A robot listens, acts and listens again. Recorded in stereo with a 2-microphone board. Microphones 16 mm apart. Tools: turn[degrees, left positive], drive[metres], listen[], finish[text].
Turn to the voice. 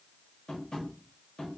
Action: listen[]
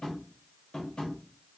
Action: listen[]
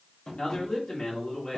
Thought: The man speaking: about 55° left or 125° left.
Action: turn[55]
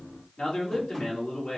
Thought: So it is at 65° left.
Action: turn[65]
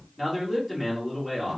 Action: finish[Found it: a man speaking, straight ahead, 1 to 2 m away.]